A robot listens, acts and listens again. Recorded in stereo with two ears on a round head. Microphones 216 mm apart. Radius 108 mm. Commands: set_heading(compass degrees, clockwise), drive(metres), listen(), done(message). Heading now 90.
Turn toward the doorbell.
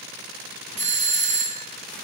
set_heading(120)
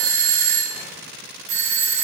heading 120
set_heading(240)
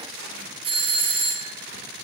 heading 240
set_heading(265)
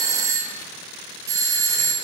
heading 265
set_heading(280)
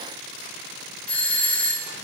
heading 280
done("Facing the doorbell.")